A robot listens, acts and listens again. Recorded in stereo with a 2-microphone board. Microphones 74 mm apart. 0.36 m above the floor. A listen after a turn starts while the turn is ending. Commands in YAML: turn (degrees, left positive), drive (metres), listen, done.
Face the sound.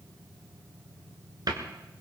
turn: -70
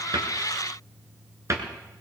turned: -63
turn: -45
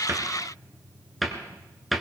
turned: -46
done: "Found it: a cupboard door, straight ahead."